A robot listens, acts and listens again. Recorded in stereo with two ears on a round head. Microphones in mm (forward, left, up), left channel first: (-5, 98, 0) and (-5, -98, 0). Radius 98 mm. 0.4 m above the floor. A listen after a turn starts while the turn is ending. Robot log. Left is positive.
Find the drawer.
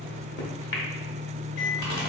cmd idle
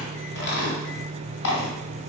cmd idle
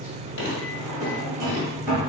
note: The drawer: about 20° right or 160° right.
cmd yaw -20
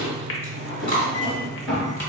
end: Facing the drawer.